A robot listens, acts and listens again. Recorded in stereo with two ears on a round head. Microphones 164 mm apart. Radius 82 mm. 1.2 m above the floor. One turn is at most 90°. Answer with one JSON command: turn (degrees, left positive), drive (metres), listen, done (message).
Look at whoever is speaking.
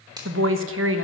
{"turn": -90}
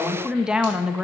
{"done": "Found it: a woman speaking, straight ahead, 1 to 2 m away."}